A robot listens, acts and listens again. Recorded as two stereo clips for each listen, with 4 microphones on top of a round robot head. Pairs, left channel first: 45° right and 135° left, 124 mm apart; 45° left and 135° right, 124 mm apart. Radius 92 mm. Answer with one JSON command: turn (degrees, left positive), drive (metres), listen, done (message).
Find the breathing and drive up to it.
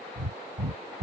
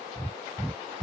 {"turn": 125}
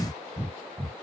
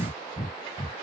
{"drive": 1.0}
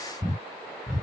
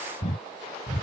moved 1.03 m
{"turn": 15}
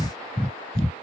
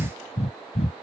{"drive": 1.0}
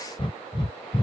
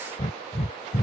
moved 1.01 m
{"drive": 1.0}
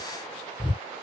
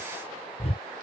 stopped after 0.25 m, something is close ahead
{"done": "I am next to the breathing."}